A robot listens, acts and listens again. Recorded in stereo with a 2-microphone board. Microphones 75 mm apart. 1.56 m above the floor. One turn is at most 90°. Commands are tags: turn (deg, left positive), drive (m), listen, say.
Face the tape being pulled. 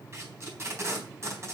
<turn deg="-40"/>
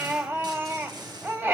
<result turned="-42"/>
<listen/>
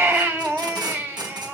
<turn deg="-90"/>
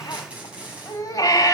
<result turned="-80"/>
<turn deg="-15"/>
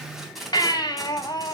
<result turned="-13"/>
<say>Facing the tape being pulled.</say>